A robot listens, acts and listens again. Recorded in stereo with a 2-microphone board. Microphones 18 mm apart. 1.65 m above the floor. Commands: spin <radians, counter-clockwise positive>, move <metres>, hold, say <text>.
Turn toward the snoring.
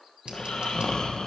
spin 0.87
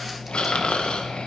spin 1.31
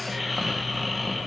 say Facing the snoring, 1 to 2 m away.